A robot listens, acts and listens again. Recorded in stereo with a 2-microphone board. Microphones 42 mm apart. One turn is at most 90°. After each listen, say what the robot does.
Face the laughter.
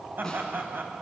Turn 60° right.
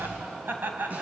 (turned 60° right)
Turn 50° right.
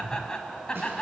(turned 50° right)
Turn 25° left.
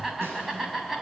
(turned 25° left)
Facing the laughter.